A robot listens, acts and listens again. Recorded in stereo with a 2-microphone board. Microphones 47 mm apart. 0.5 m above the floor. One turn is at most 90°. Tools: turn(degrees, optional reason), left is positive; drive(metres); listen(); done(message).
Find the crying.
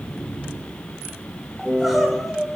turn(degrees=-30)
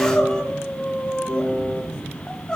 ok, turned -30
turn(degrees=20, reason="So it is at 20° left.")
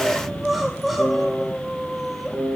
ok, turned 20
done("Found it: crying, straight ahead.")